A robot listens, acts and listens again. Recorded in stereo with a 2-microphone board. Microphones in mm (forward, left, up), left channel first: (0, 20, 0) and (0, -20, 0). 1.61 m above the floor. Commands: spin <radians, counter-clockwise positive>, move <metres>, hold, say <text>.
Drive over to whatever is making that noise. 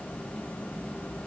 hold
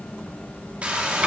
spin -0.61
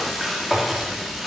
move 1.0
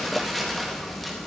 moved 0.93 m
move 1.0
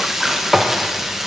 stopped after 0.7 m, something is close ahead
spin -0.17
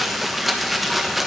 say Arrived at the frying, straight ahead.